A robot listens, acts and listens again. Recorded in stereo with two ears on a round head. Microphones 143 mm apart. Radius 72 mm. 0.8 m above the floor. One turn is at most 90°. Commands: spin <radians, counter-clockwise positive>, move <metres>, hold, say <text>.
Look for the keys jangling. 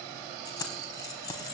spin 0.44
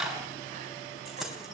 say Facing the keys jangling.